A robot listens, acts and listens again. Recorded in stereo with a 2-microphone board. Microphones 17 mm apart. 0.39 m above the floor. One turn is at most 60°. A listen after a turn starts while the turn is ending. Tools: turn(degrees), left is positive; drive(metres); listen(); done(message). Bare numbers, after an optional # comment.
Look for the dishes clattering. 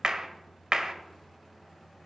listen()
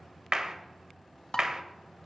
# The dishes clattering: about 50° left or 130° left.
turn(50)
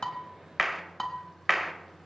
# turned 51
done("Found it: dishes clattering, straight ahead, 1 to 2 m away.")